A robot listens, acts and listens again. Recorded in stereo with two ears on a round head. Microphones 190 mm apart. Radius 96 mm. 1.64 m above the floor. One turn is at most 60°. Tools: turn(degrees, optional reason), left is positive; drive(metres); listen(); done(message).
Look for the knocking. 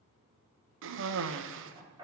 turn(degrees=-20, reason="The knocking: about 20° right or 160° right.")
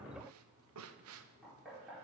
done("Facing the knocking, over 4 m away.")